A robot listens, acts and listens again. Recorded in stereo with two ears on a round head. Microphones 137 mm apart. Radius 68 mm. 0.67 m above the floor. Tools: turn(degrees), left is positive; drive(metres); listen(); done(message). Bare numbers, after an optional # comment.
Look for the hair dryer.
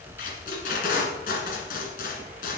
listen()
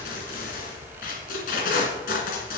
listen()
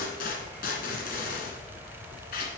done("I can't make out a hair dryer to turn to.")